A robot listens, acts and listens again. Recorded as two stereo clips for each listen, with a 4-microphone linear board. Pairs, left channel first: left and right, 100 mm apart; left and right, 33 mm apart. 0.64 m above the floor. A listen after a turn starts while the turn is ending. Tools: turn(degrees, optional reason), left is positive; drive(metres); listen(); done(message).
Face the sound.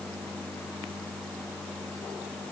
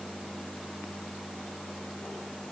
listen()
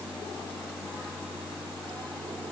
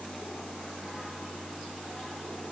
listen()
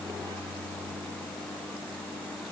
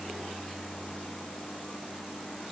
done("I can't make out anything.")